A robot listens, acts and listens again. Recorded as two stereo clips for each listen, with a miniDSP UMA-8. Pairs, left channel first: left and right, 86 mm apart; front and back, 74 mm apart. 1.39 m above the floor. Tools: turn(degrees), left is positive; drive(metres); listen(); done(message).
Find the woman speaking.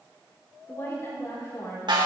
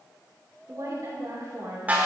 turn(degrees=145)
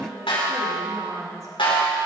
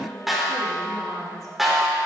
turn(degrees=-40)
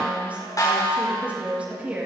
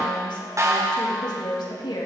turn(degrees=-15)
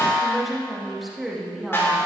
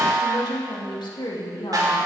done("Facing the woman speaking, 2 to 4 m away.")